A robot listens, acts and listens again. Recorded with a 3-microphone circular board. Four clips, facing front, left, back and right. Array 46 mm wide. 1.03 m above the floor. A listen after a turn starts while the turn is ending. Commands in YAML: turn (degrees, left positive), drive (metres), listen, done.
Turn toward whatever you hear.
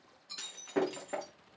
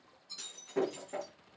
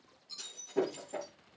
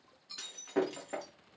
turn: -35
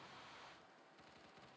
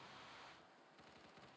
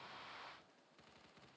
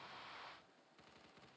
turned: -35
done: "I heard breaking glass from this way, but can't make it out now."